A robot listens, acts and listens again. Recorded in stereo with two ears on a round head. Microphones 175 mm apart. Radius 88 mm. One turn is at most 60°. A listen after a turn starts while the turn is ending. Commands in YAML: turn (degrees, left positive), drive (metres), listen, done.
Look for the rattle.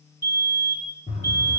turn: 30
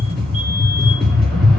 done: "Facing the rattle."